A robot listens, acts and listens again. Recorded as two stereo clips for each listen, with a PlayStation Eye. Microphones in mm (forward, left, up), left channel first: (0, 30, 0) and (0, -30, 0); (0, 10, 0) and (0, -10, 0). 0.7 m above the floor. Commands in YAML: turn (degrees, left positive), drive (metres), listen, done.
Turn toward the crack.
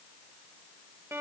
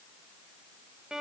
listen: true
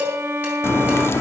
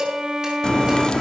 turn: 45
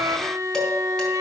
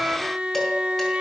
listen: true
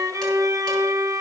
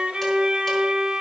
done: "I heard a crack, but can't make it out now. It was about straight ahead or 90° left."